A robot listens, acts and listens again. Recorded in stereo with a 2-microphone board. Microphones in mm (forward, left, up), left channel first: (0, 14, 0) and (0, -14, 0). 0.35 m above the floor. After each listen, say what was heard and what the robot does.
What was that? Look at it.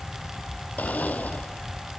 The blender: about 75° left or 105° left. Turn 75° left.
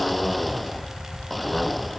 Found it: a blender, straight ahead.